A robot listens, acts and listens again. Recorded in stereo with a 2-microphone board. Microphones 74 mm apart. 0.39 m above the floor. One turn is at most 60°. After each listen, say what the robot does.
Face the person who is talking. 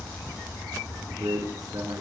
Turn 60° right.
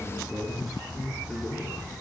Found it: a man speaking, straight ahead.